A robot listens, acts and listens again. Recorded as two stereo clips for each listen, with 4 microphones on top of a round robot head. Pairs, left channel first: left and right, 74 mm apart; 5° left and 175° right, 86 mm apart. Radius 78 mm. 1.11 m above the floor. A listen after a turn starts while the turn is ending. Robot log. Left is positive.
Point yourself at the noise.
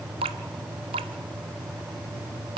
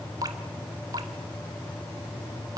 note: The dripping: 115° right.
cmd yaw -115
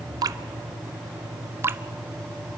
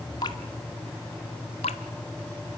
note: The dripping is now 30° right.
cmd yaw -30
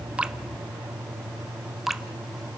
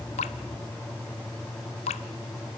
end: Facing the dripping, under 1 m away.